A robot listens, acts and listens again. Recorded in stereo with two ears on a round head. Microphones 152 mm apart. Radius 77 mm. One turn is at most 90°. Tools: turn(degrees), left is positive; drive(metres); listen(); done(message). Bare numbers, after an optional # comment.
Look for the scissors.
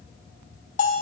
listen()
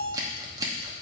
# The scissors: about 20° right or 160° right.
turn(-20)
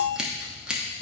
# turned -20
done("Found it: scissors, straight ahead, under 1 m away.")